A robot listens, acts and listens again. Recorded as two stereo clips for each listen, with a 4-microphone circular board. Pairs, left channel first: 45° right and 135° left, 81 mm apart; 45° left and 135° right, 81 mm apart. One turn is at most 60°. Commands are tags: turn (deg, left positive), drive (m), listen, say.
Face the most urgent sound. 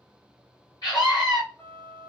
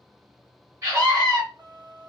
<turn deg="-60"/>
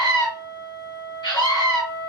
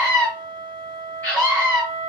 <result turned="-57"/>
<turn deg="-25"/>
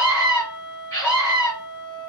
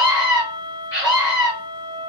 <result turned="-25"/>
<say>Found it: a scream, straight ahead.</say>